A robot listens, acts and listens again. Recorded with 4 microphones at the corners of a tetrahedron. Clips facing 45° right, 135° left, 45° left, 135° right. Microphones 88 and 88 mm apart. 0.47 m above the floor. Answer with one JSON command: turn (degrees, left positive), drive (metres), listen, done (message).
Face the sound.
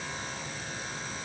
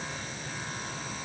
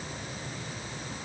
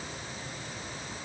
{"listen": true}
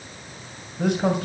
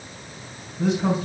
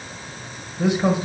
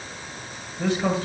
{"turn": -30}
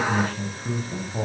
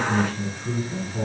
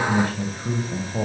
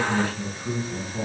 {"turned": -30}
{"done": "Facing the man speaking."}